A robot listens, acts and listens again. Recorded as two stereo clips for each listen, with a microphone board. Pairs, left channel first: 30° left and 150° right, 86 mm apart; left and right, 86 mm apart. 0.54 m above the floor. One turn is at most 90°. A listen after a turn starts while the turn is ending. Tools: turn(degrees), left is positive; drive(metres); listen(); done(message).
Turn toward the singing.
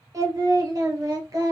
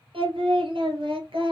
turn(degrees=-90)
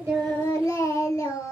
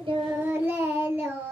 turn(degrees=-20)
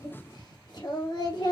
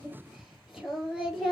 done("Facing the singing, 2 to 4 m away.")